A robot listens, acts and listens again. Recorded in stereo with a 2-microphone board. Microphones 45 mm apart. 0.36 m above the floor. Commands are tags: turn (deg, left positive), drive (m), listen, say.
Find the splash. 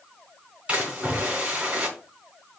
<turn deg="-25"/>
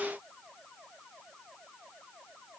<listen/>
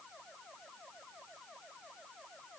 <say>I heard a splash, but can't make it out now. It was about straight ahead or 130° right.</say>